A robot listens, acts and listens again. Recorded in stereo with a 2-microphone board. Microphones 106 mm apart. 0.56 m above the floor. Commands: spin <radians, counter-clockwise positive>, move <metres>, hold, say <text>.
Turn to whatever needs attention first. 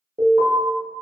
spin -1.22
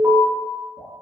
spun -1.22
spin -0.44
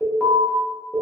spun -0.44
say Found it: an alarm, straight ahead.